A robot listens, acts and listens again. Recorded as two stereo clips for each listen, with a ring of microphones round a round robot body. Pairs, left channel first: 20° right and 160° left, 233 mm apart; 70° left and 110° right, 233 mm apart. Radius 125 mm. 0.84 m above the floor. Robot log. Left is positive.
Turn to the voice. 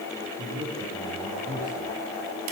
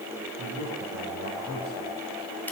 note: The man speaking: 145° right.
cmd yaw -145
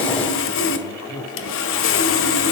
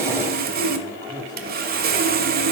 end: Found it: a man speaking, straight ahead, over 4 m away.